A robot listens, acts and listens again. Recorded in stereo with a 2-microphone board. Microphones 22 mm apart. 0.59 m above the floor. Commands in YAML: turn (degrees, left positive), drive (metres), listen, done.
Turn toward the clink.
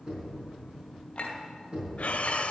turn: 55
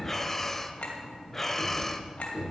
turn: 65
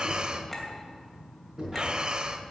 turn: 10
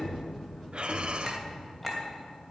done: "Found it: a clink, straight ahead, 2 to 4 m away."